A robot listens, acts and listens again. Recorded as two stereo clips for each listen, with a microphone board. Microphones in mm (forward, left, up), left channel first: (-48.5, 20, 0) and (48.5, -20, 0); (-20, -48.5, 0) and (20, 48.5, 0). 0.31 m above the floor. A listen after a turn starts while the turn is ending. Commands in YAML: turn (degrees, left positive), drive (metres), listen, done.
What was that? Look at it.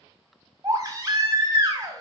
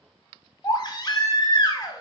turn: -70
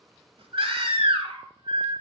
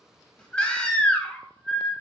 turn: -35
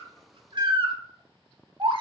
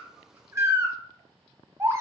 done: "Facing the baby crying."